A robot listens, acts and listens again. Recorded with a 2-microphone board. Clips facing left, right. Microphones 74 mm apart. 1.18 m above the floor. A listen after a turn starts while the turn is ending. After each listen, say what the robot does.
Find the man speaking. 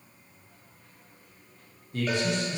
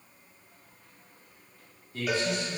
Turn 70° left.
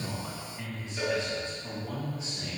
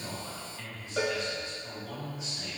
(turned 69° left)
Turn 40° left.
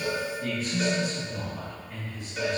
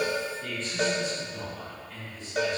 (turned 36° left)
Turn 15° left.
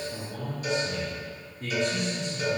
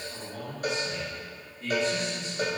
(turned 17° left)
Found it: a man speaking, straight ahead, 2 to 4 m away.